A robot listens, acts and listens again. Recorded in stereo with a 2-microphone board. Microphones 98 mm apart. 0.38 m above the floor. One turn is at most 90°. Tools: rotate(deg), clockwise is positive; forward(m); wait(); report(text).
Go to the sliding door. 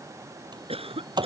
rotate(50)
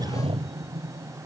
rotate(80)
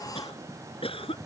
rotate(-35)
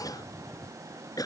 wait()
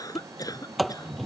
forward(1.0)
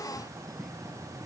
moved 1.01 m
wait()
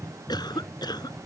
forward(1.0)
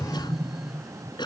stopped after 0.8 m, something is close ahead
report("I am next to the sliding door.")